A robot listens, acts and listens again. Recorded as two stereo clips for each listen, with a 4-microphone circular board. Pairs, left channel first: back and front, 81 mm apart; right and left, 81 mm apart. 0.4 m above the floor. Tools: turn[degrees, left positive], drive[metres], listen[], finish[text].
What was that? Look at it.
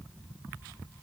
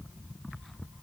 Action: listen[]
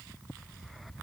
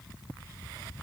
Action: listen[]
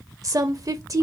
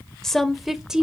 Thought: The woman speaking: 15° left.
Action: turn[15]
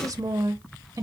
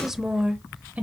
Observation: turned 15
Thought: The woman speaking is now 25° left.
Action: turn[25]
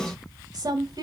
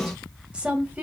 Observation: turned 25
Thought: The woman speaking is now 20° left.
Action: turn[20]
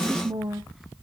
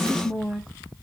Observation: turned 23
Action: finish[Facing the woman speaking.]